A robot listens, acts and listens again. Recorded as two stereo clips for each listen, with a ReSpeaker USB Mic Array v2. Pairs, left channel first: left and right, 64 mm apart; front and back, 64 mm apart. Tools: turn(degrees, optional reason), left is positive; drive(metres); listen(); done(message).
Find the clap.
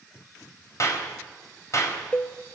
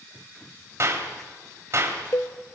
turn(degrees=130, reason="The clap: 130° left.")
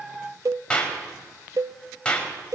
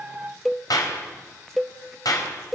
turn(degrees=15, reason="The clap is now 15° left.")
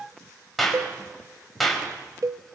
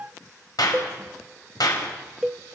done("Found it: a clap, straight ahead.")